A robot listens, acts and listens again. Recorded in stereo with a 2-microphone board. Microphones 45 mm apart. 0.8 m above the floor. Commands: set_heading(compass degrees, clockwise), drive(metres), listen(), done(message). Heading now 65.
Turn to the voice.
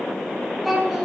set_heading(35)
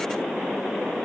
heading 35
listen()
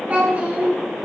set_heading(65)
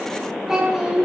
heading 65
set_heading(80)
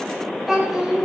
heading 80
done("Facing the child speaking.")